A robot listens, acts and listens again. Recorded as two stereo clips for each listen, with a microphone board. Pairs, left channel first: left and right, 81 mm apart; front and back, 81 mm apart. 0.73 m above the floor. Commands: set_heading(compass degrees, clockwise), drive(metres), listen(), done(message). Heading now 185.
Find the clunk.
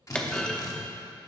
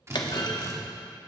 set_heading(170)
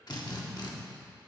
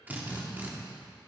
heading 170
done("I heard a clunk from this way, but can't make it out now.")